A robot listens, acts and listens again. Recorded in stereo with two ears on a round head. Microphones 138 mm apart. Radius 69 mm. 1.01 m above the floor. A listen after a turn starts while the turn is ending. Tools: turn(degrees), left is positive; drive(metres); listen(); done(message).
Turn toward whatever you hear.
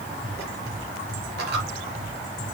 turn(degrees=-90)
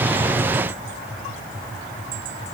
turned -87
done("I heard a dropped coin from this way, but can't make it out now.")